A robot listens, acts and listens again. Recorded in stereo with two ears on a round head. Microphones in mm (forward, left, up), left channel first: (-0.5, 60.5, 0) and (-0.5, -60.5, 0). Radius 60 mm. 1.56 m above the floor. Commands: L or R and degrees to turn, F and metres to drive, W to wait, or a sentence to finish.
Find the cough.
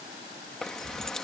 W
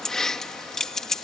W
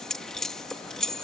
I can't make out a cough to turn to.